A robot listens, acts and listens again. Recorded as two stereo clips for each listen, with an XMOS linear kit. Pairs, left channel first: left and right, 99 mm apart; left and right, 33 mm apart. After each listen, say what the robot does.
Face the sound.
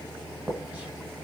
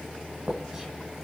Turn 30° right.
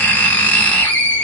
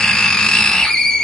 Turn 15° left.
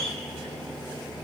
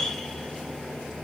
Found it: writing, straight ahead.